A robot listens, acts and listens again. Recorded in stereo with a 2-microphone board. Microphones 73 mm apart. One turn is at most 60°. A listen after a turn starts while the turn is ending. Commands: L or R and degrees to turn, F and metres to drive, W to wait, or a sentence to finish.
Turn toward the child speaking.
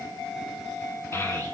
L35
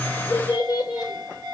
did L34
L60
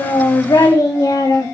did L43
L60
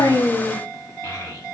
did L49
L30
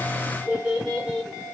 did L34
Found it: a child speaking, straight ahead, 2 to 4 m away.